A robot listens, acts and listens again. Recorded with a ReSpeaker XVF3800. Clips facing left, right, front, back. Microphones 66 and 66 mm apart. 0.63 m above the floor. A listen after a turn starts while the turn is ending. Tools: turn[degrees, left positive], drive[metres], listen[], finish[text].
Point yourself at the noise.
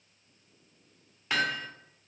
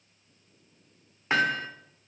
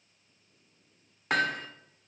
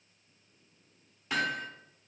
Thought: The hammering: 30° right.
Action: turn[-30]
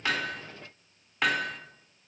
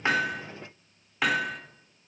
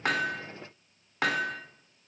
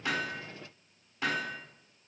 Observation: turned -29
Action: finish[Facing the hammering, 1 to 2 m away.]